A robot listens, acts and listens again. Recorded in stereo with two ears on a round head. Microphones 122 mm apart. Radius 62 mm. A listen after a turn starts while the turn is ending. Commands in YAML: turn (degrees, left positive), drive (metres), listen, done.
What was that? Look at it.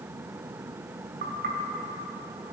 turn: -70
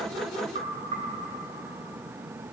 turn: -40
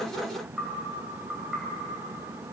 done: "Facing the knocking, 2 to 4 m away."